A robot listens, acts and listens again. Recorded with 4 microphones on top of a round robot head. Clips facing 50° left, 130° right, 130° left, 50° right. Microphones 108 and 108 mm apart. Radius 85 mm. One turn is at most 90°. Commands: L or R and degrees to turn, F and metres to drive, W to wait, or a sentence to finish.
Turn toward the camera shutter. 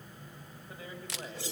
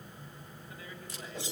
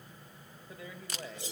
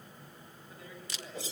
L80
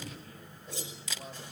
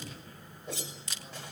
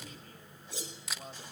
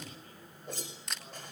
L45
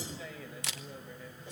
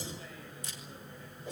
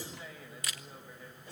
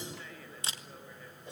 L15
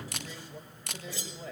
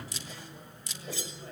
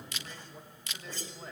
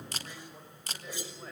Found it: a camera shutter, straight ahead.